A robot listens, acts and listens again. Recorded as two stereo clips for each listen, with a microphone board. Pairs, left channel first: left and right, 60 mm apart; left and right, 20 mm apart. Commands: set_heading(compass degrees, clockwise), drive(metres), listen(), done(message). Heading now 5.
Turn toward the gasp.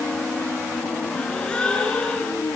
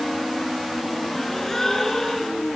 set_heading(350)
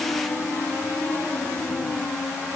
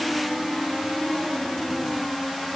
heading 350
listen()
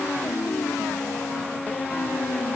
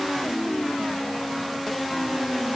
done("I heard a gasp, but can't make it out now. It was about straight ahead or 150° left.")